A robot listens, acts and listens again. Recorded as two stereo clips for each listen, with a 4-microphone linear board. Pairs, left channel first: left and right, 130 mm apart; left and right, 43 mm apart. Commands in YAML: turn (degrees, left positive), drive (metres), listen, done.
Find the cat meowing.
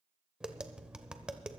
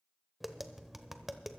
listen: true
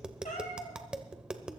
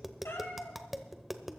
turn: 90
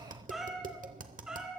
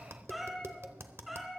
done: "Facing the cat meowing, 2 to 4 m away."